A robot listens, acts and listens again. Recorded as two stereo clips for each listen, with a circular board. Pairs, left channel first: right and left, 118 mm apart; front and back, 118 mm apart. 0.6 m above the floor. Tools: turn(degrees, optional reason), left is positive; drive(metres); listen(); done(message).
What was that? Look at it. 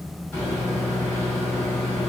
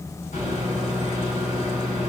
turn(degrees=-15, reason="The microwave: 15° right.")
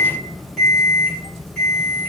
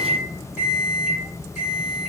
done("Found it: a microwave, straight ahead.")